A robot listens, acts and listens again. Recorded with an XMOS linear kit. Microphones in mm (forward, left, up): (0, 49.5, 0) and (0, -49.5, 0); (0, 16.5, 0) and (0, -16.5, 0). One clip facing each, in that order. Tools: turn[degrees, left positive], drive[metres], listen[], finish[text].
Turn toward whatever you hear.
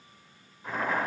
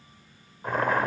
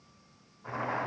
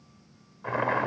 Thought: The boiling: about 60° right or 120° right.
Action: turn[-60]
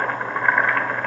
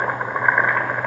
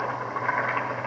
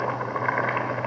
Thought: So it is at 15° right.
Action: turn[-15]
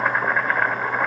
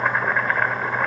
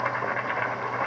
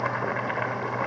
Action: finish[Facing the boiling.]